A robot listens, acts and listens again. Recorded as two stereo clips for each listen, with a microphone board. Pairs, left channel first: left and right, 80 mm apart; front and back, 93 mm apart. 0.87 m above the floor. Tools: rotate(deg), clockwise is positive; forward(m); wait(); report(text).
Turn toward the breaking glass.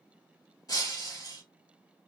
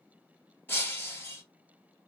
rotate(-65)
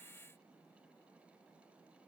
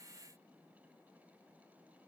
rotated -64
report("I heard breaking glass from this way, but can't make it out now.")